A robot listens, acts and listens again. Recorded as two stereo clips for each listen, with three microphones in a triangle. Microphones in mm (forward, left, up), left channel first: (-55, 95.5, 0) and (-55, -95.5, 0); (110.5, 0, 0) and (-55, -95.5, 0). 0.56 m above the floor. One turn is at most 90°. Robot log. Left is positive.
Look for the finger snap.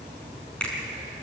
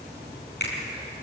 end: Found it: a finger snap, straight ahead, over 4 m away.